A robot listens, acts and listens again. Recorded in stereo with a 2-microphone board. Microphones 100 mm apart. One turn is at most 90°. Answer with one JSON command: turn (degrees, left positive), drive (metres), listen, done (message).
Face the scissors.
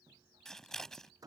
{"turn": 30}
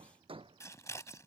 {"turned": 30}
{"turn": 90}
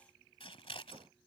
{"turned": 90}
{"turn": 80}
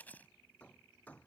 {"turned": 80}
{"turn": 20}
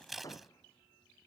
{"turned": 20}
{"done": "Found it: scissors, straight ahead."}